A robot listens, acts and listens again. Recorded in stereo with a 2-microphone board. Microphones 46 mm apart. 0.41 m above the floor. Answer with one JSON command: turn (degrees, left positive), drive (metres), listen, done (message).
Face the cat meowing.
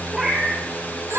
{"turn": -30}
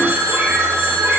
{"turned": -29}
{"listen": true}
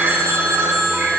{"listen": true}
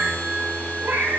{"turn": -130}
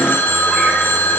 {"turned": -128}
{"listen": true}
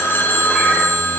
{"listen": true}
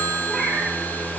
{"done": "Facing the cat meowing, over 4 m away."}